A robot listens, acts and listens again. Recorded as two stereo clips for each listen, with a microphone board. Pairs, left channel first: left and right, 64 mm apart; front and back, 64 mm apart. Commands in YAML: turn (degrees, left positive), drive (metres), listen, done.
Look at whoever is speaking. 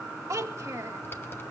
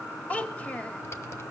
turn: -65
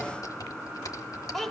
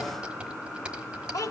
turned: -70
done: "Found it: a child speaking, straight ahead, 1 to 2 m away."